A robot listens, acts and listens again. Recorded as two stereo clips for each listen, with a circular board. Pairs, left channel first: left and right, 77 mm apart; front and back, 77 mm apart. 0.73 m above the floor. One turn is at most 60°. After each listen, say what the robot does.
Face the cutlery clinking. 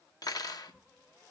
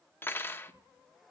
Turn 60° left.
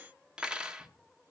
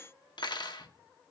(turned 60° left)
Turn 10° right.
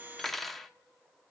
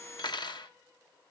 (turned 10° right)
Facing the cutlery clinking, under 1 m away.